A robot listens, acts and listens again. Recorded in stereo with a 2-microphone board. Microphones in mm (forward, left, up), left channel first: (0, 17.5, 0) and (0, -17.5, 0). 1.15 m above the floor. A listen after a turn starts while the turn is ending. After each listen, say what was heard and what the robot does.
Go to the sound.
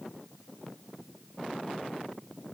Keep listening.
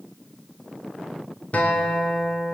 The guitar: about 45° left or 135° left. Turn 45° left.
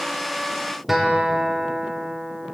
Drive 1.0 m forward.
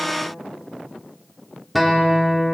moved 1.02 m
Drive 1.0 m forward.
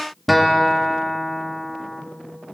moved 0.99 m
Drive 1.0 m forward.
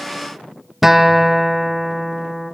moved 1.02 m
The guitar is now 10° right. Turn 10° right.
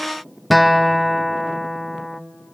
Drive 1.0 m forward.
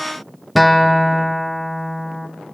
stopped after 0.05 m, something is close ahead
I am next to the guitar.